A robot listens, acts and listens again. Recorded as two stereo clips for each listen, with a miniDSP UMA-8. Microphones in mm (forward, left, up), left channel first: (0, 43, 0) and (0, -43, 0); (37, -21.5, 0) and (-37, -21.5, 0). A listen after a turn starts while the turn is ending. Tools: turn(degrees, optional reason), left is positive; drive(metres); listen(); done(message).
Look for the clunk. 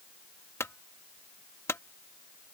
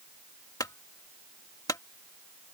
turn(degrees=35, reason="The clunk: 35° left.")
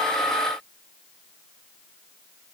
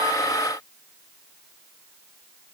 done("I heard a clunk from this way, but can't make it out now.")